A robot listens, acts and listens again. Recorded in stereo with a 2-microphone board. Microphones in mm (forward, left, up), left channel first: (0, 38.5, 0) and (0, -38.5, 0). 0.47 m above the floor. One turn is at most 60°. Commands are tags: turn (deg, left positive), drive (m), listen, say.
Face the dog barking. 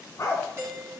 <turn deg="40"/>
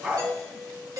<turn deg="-15"/>
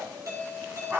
<turn deg="-25"/>
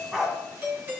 <say>Found it: a dog barking, straight ahead, 1 to 2 m away.</say>